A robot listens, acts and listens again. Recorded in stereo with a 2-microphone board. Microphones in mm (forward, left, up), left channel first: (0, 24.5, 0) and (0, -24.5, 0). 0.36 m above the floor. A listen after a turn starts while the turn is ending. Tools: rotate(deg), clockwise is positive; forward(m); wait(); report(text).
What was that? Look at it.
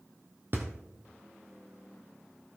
rotate(50)
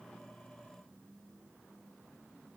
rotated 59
wait()
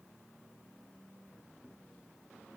report("I heard a thud, but can't make it out now. It was about 10° left or 75° right.")